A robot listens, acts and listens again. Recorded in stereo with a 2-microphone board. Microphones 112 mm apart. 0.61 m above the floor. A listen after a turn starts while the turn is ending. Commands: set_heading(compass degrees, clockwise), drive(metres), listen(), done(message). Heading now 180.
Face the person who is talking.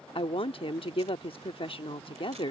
set_heading(125)
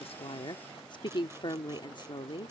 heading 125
set_heading(70)
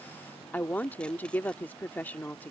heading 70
set_heading(50)
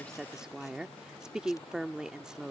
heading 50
done("Facing the woman speaking.")